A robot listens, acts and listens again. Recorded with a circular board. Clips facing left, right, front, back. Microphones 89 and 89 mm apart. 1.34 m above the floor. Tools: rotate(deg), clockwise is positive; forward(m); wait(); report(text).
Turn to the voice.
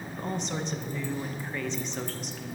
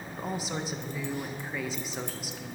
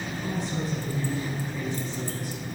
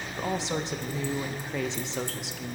rotate(175)
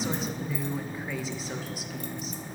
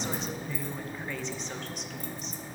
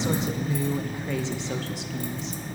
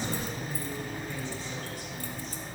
report("Found it: a woman speaking, straight ahead, 1 to 2 m away.")